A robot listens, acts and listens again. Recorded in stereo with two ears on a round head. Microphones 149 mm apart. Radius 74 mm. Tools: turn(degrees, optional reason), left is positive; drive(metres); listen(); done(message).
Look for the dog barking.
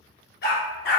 turn(degrees=75, reason="The dog barking: about 75° left or 105° left.")
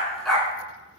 done("Found it: a dog barking, straight ahead.")